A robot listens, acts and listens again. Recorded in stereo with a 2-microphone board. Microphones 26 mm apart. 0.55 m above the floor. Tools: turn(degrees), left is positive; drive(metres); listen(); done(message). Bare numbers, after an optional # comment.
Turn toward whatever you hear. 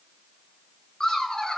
# The laughter: about 30° left or 150° left.
turn(30)
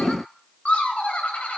# So it is at 110° left.
turn(110)
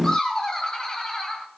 # The laughter is now 20° left.
turn(20)
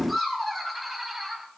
done("Facing the laughter, 2 to 4 m away.")